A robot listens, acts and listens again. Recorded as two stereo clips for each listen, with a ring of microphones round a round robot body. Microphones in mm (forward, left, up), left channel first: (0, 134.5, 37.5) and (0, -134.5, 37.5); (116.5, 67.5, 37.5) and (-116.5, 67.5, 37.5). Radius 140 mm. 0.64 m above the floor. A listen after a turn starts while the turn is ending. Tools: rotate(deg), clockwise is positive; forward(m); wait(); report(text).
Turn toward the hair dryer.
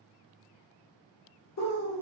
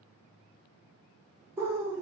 wait()
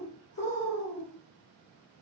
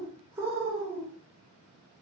wait()
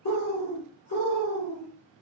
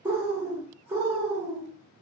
report("I can't make out a hair dryer to turn to.")